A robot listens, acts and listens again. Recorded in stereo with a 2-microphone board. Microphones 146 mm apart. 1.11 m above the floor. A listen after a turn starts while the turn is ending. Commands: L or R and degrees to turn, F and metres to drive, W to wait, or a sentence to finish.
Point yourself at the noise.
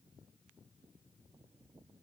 W
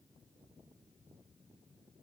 W
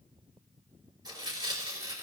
R30
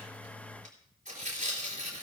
R120
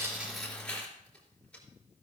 L10
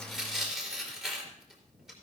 Found it: tearing paper, straight ahead.